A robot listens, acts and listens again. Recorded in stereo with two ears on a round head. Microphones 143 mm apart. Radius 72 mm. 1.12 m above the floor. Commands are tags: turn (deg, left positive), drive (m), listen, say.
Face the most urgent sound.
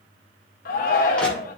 <turn deg="55"/>
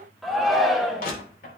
<say>Facing the shout.</say>